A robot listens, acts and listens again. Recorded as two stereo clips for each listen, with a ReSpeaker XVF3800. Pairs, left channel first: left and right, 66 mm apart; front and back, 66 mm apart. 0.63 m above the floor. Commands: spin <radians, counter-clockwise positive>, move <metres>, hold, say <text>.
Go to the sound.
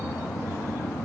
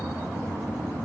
hold
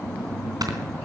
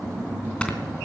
spin -1.31
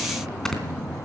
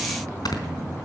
move 1.0
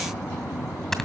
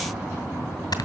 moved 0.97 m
move 1.0
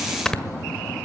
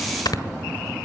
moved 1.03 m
spin 0.17
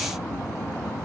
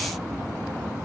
hold
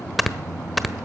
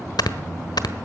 move 1.0
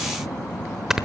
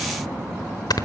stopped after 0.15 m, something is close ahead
spin -0.17
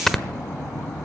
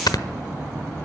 say Arrived at the snoring, straight ahead.